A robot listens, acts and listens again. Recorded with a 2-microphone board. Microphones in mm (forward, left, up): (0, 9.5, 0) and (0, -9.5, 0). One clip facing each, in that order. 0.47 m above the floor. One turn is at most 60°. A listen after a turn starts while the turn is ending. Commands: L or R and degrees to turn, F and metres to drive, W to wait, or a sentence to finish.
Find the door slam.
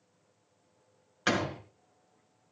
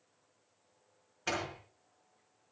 L60
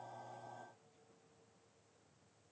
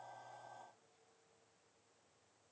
L30
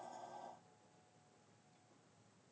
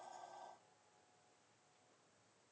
I heard a door slam from this way, but can't make it out now.